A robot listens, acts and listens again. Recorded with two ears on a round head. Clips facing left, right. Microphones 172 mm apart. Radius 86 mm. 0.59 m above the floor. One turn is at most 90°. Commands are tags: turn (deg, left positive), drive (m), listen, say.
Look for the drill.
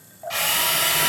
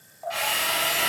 <turn deg="60"/>
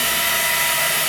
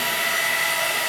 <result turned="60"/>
<turn deg="60"/>
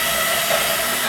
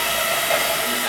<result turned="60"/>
<say>Found it: a drill, straight ahead, 1 to 2 m away.</say>